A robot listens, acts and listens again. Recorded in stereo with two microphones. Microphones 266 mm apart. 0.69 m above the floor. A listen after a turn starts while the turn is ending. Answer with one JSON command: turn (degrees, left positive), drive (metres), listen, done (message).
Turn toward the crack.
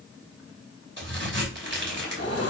{"turn": -45}
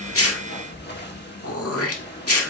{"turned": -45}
{"listen": true}
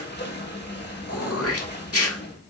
{"done": "I heard a crack, but can't make it out now. It was about straight ahead or 90° right."}